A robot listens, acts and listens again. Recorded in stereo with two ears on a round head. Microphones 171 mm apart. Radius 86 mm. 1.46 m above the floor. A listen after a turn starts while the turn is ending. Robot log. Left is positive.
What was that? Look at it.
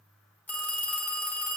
cmd yaw +30
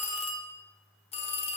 note: So it is at 140° left.
cmd yaw +140
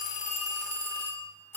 note: The phone ringing is now 15° left.
cmd yaw +15
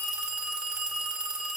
end: Facing the phone ringing.